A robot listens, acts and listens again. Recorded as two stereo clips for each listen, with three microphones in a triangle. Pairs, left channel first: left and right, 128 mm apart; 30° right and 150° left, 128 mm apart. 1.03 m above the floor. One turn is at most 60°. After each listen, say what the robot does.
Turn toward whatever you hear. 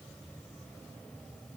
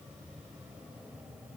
Keep listening.
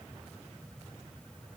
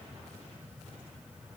Keep listening.
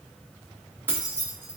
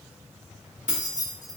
Turn 15° right.
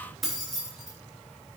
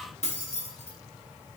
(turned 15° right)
Facing the keys jangling, under 1 m away.